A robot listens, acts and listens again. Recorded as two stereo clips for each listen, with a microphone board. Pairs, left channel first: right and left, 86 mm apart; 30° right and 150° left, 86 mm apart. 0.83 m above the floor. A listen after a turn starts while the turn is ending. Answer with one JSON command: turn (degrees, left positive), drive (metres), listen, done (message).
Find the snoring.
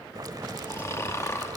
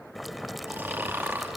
{"turn": -145}
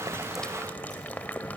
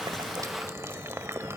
{"listen": true}
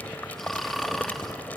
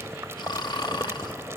{"done": "Found it: snoring, straight ahead."}